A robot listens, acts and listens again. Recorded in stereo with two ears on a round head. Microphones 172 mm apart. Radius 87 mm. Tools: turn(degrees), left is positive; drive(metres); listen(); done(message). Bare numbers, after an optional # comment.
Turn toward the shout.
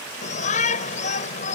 # The shout: about 40° left or 140° left.
turn(40)
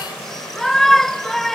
done("Found it: a shout, straight ahead.")